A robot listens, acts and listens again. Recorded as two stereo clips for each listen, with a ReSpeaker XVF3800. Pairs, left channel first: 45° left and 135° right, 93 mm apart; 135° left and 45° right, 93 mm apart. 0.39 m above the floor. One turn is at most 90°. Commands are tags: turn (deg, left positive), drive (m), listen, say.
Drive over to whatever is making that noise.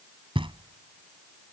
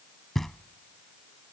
<turn deg="-90"/>
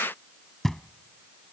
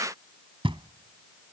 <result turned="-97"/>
<turn deg="-40"/>
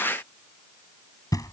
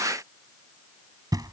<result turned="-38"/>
<drive m="1.0"/>
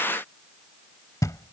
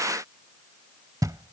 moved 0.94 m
<drive m="1.0"/>
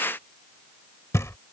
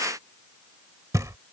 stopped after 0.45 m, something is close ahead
<say>Arrived at the knocking, straight ahead.</say>